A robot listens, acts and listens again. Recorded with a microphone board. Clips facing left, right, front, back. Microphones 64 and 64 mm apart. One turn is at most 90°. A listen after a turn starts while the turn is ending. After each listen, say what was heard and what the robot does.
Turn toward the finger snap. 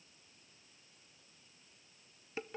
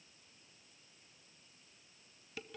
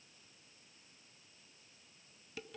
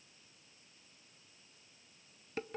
Keep listening.
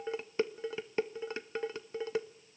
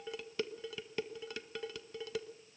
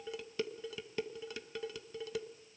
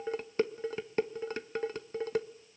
Keep listening.
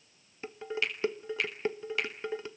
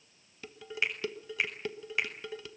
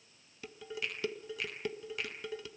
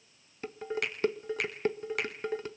The finger snap: 160° right. Turn 90° right.
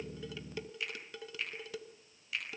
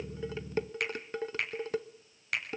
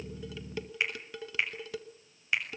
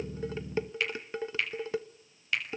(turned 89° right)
The finger snap is now 70° right. Turn 70° right.
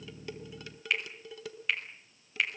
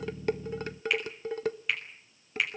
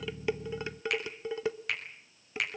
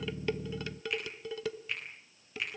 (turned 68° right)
Facing the finger snap, over 4 m away.